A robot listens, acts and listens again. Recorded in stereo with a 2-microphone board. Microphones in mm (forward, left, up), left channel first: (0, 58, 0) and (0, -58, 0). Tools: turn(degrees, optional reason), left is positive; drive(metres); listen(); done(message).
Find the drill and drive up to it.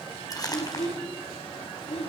listen()
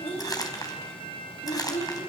listen()
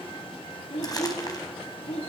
done("I can't make out a drill, only a child speaking and crumpling.")